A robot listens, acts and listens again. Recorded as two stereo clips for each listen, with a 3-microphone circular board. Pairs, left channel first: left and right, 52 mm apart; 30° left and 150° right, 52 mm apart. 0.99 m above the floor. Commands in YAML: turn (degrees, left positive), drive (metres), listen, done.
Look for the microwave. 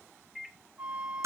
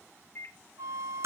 done: "Found it: a microwave, straight ahead, 1 to 2 m away."